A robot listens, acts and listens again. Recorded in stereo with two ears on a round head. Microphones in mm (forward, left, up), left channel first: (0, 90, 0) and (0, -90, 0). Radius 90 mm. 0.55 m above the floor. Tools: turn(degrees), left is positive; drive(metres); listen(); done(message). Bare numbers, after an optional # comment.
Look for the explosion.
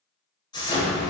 # The explosion: about 20° left or 160° left.
turn(20)
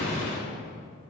# So it is at 140° left.
turn(140)
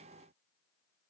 done("Facing where the explosion came from. I can't hear it now.")